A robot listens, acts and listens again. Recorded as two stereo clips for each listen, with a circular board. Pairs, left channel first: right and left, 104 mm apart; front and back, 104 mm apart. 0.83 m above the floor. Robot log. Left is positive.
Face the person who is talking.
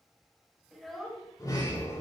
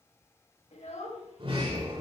end: Found it: a child speaking, straight ahead, 2 to 4 m away.